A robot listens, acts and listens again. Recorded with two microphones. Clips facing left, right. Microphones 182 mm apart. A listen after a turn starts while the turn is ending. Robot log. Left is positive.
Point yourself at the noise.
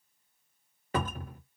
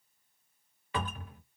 note: The cupboard door: about 45° left or 135° left.
cmd yaw +45
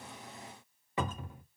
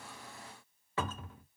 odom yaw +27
note: So it is at 15° left.
cmd yaw +15
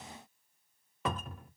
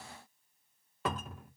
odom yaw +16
end: Facing the cupboard door, under 1 m away.